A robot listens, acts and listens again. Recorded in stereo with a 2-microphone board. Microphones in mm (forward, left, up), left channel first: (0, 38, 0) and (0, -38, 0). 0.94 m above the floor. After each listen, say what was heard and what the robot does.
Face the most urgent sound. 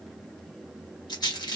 Keep listening.
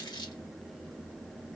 Keep listening.
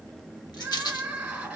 The crying: about 15° right or 165° right. Turn 15° right.
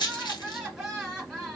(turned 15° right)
Facing the crying.